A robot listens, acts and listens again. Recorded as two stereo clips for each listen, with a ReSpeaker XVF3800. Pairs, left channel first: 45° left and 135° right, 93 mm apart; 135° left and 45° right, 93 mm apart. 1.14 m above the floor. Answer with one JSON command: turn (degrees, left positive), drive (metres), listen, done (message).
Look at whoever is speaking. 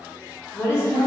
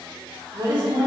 {"turn": -15}
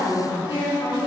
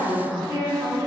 {"done": "Found it: a woman speaking, straight ahead."}